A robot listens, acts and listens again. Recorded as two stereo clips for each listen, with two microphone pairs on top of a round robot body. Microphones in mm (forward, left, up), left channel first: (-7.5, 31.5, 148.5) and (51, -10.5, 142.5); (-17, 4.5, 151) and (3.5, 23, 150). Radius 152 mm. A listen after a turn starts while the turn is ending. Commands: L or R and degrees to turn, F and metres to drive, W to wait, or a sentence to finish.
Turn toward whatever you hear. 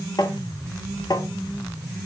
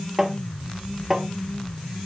L115
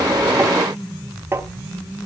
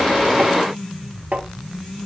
L15
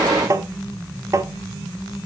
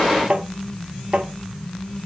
Found it: tapping, straight ahead, 1 to 2 m away.